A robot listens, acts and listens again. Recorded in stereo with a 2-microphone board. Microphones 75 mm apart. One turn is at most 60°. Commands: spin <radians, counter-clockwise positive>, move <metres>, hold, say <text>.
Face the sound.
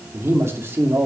spin -0.61
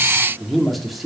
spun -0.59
say Found it: a man speaking, straight ahead, 2 to 4 m away.